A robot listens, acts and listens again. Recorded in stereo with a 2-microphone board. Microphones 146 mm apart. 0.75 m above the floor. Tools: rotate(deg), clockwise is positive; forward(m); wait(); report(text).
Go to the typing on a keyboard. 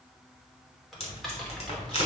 rotate(-30)
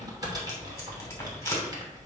rotate(30)
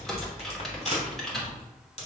forward(1.0)
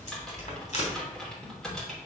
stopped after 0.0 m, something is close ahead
report("Something is in my way. I am facing the typing on a keyboard but have not reached it.")